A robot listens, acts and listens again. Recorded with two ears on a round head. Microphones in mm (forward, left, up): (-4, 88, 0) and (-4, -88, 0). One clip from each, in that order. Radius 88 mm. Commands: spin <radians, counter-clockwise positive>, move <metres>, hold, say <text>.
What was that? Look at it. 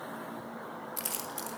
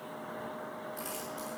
spin 0.87
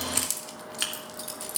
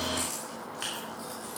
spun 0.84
spin 1.22
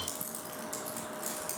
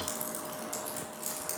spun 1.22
say Found it: keys jangling, straight ahead, 2 to 4 m away.